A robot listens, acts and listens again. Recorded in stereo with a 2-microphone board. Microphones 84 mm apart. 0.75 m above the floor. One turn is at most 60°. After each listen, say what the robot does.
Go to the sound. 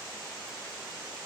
Keep listening.
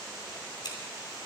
Turn 60° left.
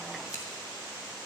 Keep listening.
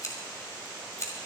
Turn 45° left.
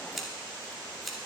Drive 1.0 m forward.
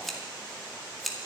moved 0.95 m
Drive 1.0 m forward.
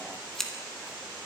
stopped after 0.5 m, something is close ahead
Arrived at the scissors, straight ahead.